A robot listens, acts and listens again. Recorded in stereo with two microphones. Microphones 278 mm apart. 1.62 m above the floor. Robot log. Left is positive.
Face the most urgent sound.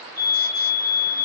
note: The fire alarm: about 60° right or 120° right.
cmd yaw -60
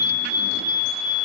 note: So it is at 55° right.
cmd yaw -55
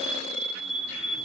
end: Found it: a fire alarm, straight ahead.